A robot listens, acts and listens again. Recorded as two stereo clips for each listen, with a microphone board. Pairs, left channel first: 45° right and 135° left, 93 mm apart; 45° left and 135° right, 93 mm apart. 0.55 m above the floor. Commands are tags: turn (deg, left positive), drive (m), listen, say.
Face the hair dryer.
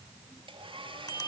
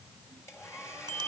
<turn deg="105"/>
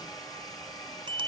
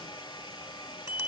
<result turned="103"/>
<say>Found it: a hair dryer, straight ahead.</say>